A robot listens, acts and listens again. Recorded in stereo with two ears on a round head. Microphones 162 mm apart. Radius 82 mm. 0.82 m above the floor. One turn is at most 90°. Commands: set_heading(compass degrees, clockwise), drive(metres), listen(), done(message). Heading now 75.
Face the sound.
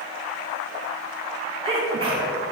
set_heading(105)
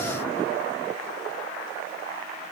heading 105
listen()
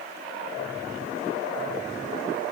done("I heard a sneeze, but can't make it out now. It was about straight ahead or 120° right.")